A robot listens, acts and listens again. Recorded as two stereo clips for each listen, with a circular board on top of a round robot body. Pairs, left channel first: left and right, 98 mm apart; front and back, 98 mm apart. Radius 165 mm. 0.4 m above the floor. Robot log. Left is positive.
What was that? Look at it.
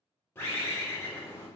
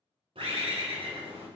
note: The bird: 155° left.
cmd yaw +155
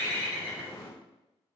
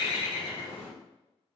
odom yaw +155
note: The bird is now 20° left.
cmd yaw +20
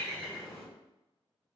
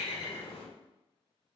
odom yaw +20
end: Facing the bird, 1 to 2 m away.